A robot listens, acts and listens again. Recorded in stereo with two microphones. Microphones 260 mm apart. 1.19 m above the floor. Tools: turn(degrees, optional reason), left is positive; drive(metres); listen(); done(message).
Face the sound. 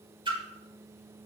turn(degrees=-20, reason="The splash: about 20° right or 160° right.")
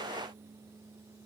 listen()
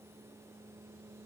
done("I heard a splash, but can't make it out now. It was about straight ahead or 140° right.")